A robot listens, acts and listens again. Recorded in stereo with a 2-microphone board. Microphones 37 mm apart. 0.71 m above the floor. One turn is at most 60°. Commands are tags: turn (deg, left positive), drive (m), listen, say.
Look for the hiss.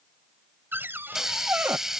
<turn deg="-30"/>
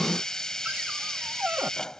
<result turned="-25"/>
<turn deg="15"/>
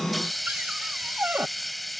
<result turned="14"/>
<say>Facing the hiss.</say>